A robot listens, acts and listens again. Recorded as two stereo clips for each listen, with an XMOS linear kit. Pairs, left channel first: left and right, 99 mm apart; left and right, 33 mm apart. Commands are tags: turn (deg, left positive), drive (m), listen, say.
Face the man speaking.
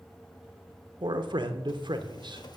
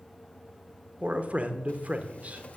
<turn deg="-55"/>
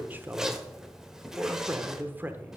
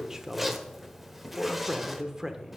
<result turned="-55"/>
<turn deg="-25"/>
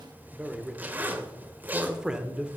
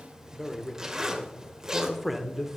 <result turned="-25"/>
<turn deg="-10"/>
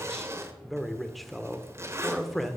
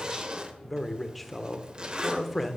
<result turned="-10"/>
<say>Facing the man speaking, 1 to 2 m away.</say>